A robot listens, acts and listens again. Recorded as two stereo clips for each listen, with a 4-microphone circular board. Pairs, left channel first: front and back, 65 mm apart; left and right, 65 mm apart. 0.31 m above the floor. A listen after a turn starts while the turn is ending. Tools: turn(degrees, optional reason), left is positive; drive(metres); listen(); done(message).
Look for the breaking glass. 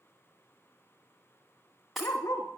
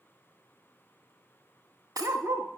turn(degrees=-90, reason="The breaking glass: 90° right.")
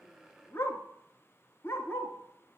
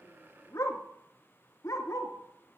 done("I heard breaking glass from this way, but can't make it out now.")